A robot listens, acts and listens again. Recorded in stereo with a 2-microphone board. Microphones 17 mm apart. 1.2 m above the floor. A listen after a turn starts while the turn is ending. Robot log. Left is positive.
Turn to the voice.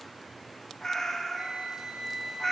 cmd idle
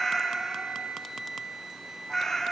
cmd idle
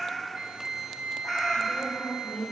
cmd yaw +90
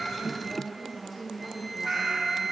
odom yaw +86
note: So it is at 10° left.
cmd yaw +10
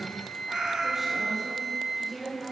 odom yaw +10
end: Facing the woman speaking.